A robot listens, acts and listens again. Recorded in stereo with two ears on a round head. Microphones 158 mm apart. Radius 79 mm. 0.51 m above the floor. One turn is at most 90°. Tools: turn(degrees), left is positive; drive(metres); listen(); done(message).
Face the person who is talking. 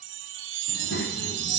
turn(degrees=75)
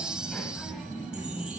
turn(degrees=-15)
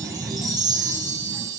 turn(degrees=-15)
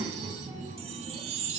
turn(degrees=-20)
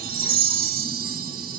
listen()
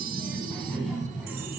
done("Found it: a child speaking, straight ahead, 2 to 4 m away.")